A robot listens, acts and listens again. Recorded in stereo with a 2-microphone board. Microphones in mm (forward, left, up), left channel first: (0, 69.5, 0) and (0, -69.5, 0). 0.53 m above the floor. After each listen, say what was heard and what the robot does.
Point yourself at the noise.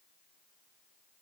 Keep listening.
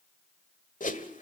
The whoosh: about 70° left or 110° left. Turn 70° left.
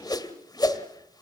So it is at 30° left. Turn 30° left.
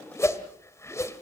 The whoosh is now 20° left. Turn 20° left.
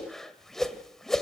Facing the whoosh.